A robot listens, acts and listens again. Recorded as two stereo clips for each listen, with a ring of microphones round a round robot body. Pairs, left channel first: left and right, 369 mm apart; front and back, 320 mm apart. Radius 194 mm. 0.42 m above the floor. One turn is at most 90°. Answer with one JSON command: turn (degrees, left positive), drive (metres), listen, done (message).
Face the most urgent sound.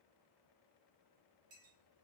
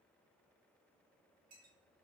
{"listen": true}
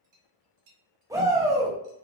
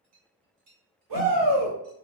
{"turn": -90}
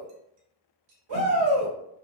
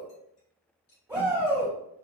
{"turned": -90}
{"turn": -90}
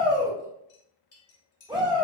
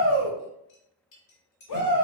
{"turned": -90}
{"turn": -10}
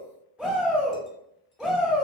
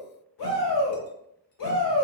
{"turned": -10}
{"done": "Found it: a shout, straight ahead."}